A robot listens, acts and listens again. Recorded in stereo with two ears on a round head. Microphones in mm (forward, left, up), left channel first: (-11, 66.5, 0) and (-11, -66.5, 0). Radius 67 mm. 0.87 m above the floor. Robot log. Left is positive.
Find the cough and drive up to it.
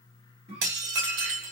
note: The cough: about 40° right or 140° right.
cmd yaw -40
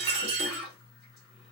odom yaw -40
cmd fwd 1.0
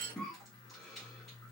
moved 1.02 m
cmd fwd 1.0
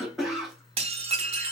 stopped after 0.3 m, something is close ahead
end: I am next to the cough.